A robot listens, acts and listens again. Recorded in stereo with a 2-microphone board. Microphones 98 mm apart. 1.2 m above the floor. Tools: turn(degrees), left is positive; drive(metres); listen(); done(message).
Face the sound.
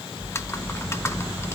turn(degrees=25)
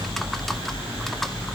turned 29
done("Found it: typing on a keyboard, straight ahead, 1 to 2 m away.")